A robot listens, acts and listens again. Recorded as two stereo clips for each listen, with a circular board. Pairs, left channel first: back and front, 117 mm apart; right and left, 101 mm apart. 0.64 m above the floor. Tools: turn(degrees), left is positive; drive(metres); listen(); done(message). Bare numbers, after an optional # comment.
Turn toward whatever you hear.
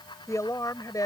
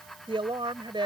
# The woman speaking: 125° left.
turn(125)
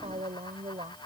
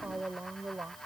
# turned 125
# The woman speaking is now 25° left.
turn(25)
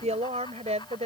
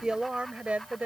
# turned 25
# The woman speaking is now 15° left.
turn(15)
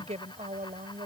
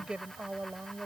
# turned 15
# The woman speaking is now 15° left.
turn(15)
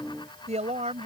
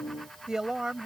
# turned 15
# The woman speaking is now 10° left.
turn(10)
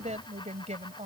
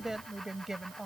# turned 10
done("Found it: a woman speaking, straight ahead.")